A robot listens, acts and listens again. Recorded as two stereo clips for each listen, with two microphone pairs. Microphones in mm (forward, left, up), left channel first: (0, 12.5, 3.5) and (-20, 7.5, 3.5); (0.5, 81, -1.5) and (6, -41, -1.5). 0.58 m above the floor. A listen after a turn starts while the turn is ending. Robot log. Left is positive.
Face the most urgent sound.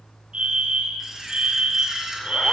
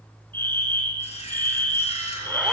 note: The fire alarm: 165° left.
cmd yaw +165
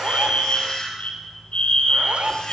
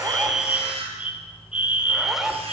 end: Found it: a fire alarm, straight ahead, 2 to 4 m away.